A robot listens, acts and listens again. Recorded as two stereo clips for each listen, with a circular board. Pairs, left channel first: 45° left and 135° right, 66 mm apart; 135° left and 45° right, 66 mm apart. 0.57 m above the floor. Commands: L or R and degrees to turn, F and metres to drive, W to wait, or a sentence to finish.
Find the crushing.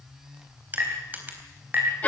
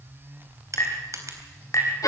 R75
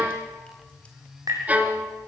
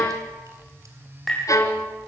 W
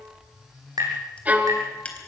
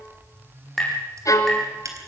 R25
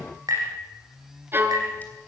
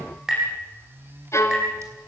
W
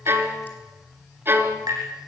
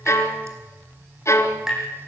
W
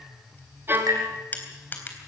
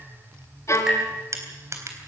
R10
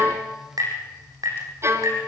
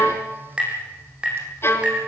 W
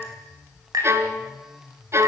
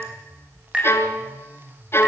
W
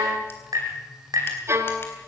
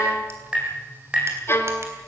Facing where the crushing came from. I can't hear it now.